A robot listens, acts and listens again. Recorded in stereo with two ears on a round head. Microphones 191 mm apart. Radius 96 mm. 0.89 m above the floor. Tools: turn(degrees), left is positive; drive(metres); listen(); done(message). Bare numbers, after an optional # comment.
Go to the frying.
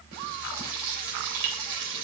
# The frying: about 60° right or 120° right.
turn(-60)
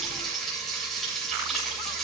drive(1.0)
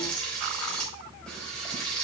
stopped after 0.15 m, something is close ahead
done("Blocked. The frying is further on, straight ahead.")